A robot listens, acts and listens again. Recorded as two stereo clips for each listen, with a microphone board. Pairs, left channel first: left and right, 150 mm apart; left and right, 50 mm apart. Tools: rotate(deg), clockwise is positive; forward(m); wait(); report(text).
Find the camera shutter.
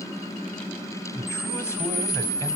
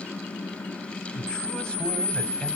rotate(-20)
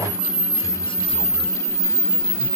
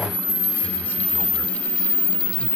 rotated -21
report("Facing the camera shutter, under 1 m away.")